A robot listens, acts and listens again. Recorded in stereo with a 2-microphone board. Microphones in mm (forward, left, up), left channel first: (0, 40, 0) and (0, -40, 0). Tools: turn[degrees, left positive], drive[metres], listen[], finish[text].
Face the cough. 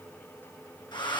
Action: listen[]
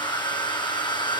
Action: listen[]
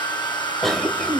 Action: turn[30]
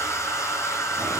Action: listen[]
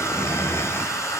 Thought: So it is at 145° left.
Action: turn[145]
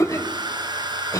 Thought: The cough is now 45° left.
Action: turn[45]
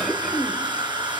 Action: finish[Found it: a cough, straight ahead, 2 to 4 m away.]